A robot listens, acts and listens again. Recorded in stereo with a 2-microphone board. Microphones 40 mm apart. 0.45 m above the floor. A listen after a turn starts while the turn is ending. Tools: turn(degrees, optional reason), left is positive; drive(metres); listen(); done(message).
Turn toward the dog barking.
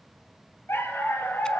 turn(degrees=90)
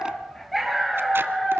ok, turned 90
turn(degrees=10, reason="So it is at 10° left.")
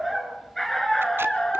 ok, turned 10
turn(degrees=20, reason="The dog barking is now 20° left.")
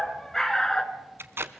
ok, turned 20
turn(degrees=20, reason="The dog barking is now 20° left.")
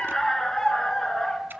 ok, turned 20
turn(degrees=15, reason="The dog barking is now 15° left.")
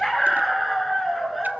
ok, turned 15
done("Found it: a dog barking, straight ahead.")